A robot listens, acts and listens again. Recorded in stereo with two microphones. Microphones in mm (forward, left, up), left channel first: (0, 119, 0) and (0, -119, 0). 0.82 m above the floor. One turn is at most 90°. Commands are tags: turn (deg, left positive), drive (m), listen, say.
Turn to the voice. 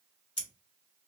<listen/>
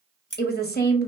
<turn deg="40"/>
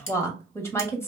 <turn deg="10"/>
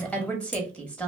<say>Found it: a woman speaking, straight ahead, under 1 m away.</say>